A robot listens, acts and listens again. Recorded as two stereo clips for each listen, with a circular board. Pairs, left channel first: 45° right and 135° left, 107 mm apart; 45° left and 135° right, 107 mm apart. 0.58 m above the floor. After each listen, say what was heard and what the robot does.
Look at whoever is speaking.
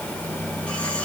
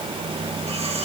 Keep listening.
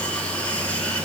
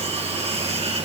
Keep listening.
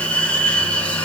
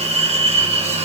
I can't make out anyone speaking to turn to.